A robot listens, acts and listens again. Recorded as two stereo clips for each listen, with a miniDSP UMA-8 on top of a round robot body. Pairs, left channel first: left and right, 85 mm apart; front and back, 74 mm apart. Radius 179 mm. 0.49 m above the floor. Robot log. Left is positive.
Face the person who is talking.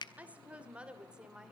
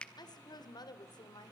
note: The woman speaking: 10° right.
cmd yaw -10
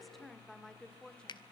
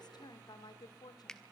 note: The woman speaking is now 10° left.
cmd yaw +10
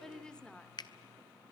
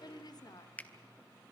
note: The woman speaking is now 15° left.
cmd yaw +15
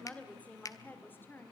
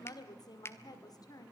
note: The woman speaking is now 30° left.
cmd yaw +30
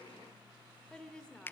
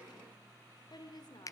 note: The woman speaking is now 10° left.
cmd yaw +10
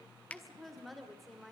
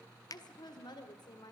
end: Facing the woman speaking.